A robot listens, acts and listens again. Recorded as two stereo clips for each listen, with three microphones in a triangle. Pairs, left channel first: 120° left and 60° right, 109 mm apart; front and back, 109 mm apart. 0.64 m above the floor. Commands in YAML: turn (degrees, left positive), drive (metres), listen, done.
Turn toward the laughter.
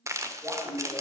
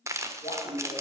done: "Facing the laughter."